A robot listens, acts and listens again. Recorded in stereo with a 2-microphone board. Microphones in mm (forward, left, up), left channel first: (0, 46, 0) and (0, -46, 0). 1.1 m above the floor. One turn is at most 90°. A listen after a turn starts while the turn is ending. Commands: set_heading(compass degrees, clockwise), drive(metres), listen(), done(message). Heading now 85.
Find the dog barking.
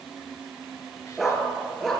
set_heading(55)
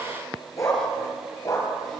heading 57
set_heading(327)
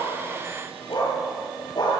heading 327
set_heading(277)
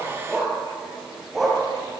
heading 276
done("Found it: a dog barking, straight ahead.")